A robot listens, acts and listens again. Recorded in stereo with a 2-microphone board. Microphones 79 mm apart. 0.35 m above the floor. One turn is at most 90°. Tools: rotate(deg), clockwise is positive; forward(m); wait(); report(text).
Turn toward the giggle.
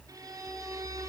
wait()
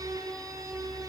wait()
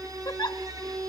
rotate(-50)
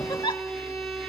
rotate(-80)
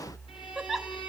report("Found it: a giggle, straight ahead.")